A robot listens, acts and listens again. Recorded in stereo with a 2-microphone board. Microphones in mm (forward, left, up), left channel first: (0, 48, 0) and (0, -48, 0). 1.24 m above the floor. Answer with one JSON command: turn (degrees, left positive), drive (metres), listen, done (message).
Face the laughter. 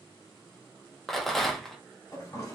{"listen": true}
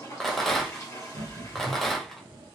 {"turn": -90}
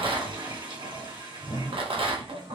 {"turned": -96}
{"listen": true}
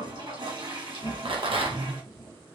{"turn": 35}
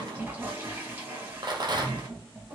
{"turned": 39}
{"done": "Found it: laughter, straight ahead, 1 to 2 m away."}